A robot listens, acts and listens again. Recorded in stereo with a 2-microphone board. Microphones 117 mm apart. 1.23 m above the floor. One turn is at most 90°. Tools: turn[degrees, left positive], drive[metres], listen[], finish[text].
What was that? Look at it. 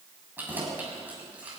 Action: turn[-30]
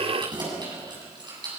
Thought: So it is at 140° right.
Action: turn[-90]
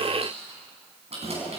Thought: The keys jangling is now 60° right.
Action: turn[-60]
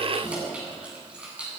Thought: The keys jangling is now 10° right.
Action: turn[-10]
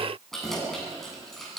Action: finish[Facing the keys jangling, over 4 m away.]